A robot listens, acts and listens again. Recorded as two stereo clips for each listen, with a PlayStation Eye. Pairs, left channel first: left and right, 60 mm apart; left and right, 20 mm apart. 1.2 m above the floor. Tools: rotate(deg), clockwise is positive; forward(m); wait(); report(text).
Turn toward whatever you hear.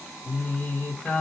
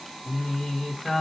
rotate(-30)
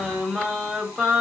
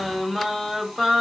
report("Facing the singing, 1 to 2 m away.")